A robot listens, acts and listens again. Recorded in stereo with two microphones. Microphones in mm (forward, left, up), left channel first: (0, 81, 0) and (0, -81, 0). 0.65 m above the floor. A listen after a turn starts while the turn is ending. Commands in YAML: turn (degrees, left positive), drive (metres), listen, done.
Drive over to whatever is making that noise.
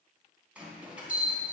turn: -30
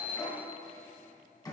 turn: 25
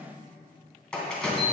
drive: 1.0
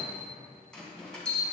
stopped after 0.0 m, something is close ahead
done: "Blocked. The bell is further on, straight ahead."